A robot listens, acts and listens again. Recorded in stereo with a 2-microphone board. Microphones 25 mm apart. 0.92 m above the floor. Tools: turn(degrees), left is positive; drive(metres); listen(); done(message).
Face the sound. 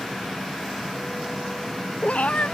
turn(degrees=60)
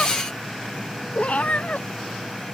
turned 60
turn(degrees=65)
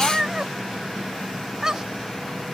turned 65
turn(degrees=-25)
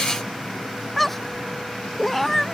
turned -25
done("Facing the cat meowing.")